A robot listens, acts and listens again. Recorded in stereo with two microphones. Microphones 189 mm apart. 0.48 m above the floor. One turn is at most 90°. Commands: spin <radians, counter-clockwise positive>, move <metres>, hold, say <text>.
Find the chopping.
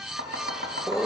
spin -1.31
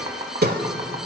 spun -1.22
spin -0.35
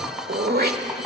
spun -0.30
say Found it: chopping, straight ahead.